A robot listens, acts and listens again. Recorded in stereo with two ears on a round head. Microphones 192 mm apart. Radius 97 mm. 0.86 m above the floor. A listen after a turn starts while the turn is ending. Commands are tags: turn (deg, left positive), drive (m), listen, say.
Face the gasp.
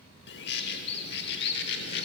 <listen/>
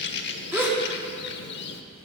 <turn deg="-30"/>
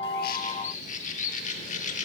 <listen/>
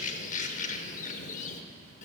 <say>I heard a gasp, but can't make it out now. It was about 20° left or 140° right.</say>